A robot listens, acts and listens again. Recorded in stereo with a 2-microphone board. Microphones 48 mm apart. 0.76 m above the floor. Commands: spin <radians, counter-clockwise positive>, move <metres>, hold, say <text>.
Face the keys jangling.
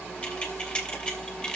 spin 0.35
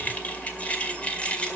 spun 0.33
spin 0.44
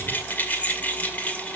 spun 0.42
spin 0.61
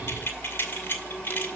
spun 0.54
spin 2.27
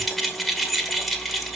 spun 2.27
say Found it: keys jangling, straight ahead, 2 to 4 m away.